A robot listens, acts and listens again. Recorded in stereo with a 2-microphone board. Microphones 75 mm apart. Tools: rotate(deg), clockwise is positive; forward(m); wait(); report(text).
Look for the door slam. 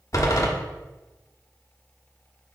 rotate(-45)
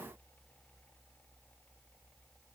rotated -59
wait()
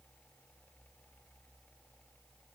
report("I heard a door slam, but can't make it out now. It was about 15° right or 75° left.")